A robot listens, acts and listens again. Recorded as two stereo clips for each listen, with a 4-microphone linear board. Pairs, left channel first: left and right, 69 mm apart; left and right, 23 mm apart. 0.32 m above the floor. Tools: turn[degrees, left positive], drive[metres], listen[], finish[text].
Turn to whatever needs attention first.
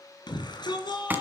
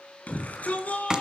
Thought: The shout: about 70° left or 110° left.
Action: turn[70]
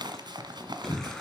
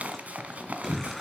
Action: finish[Found it: a shout, straight ahead, over 4 m away.]